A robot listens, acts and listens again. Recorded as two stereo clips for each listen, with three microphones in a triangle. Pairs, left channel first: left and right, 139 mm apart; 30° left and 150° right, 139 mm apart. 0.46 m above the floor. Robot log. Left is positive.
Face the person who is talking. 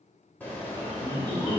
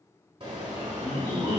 note: The man speaking: 85° left.
cmd yaw +85
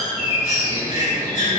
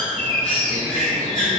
cmd idle
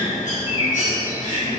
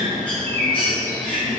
cmd idle
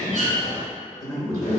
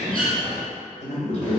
note: The man speaking is now 25° left.
cmd yaw +25
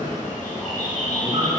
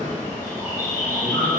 cmd idle
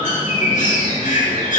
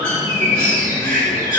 cmd idle
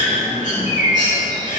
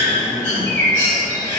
end: Facing where the man speaking came from. I can't hear it now.